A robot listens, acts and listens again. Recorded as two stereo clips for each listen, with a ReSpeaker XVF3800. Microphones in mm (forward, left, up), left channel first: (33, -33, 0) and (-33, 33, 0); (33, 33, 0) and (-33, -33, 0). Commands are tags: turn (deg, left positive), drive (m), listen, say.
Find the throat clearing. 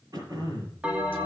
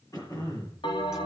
<turn deg="90"/>
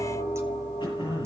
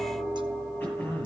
<turn deg="-25"/>
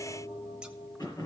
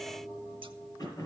<say>Facing the throat clearing, over 4 m away.</say>